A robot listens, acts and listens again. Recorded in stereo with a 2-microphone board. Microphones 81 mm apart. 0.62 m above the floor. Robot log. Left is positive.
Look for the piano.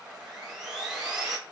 cmd idle
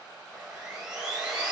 cmd idle
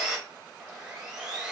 end: I can't make out a piano to turn to.